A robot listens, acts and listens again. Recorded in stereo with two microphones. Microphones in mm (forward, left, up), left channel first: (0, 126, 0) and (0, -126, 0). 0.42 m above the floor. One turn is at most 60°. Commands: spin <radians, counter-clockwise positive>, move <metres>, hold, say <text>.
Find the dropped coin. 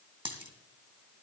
spin -0.35
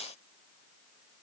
hold
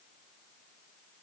say I heard a dropped coin, but can't make it out now. It was about straight ahead or 140° right.